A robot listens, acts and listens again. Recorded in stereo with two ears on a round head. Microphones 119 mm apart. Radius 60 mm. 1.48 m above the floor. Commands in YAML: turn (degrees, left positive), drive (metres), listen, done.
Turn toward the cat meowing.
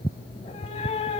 turn: 45
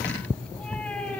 turn: 10
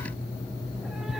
listen: true
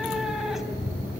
done: "Facing the cat meowing, 2 to 4 m away."